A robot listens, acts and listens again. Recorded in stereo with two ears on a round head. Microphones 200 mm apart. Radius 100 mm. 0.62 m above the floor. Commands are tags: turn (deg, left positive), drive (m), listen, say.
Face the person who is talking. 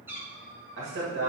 <turn deg="-55"/>
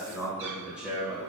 <say>Found it: a man speaking, straight ahead, 2 to 4 m away.</say>